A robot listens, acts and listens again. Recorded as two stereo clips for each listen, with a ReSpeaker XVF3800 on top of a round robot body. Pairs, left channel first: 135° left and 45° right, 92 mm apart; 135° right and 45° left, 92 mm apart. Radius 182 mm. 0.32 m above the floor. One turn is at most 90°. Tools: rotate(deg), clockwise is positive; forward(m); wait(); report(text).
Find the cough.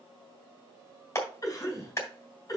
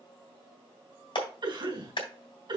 rotate(-85)
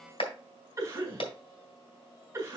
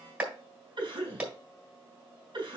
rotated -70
rotate(-15)
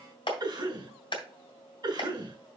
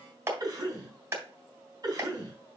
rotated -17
report("Facing the cough, over 4 m away.")